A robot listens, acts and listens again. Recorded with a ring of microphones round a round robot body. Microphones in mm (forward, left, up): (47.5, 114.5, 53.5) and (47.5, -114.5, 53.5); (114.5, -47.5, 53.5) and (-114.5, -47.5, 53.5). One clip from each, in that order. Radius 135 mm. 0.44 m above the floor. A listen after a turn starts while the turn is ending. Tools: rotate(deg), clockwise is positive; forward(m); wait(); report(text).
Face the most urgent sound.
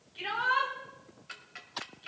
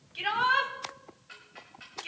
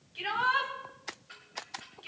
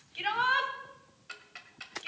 rotate(130)
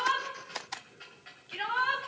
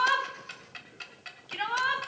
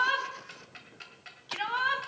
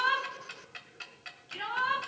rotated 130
rotate(30)
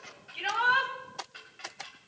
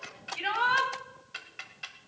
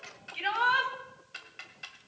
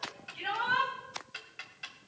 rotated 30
rotate(10)
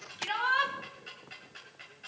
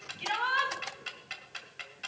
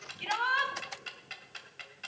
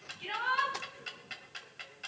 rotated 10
report("Facing the shout.")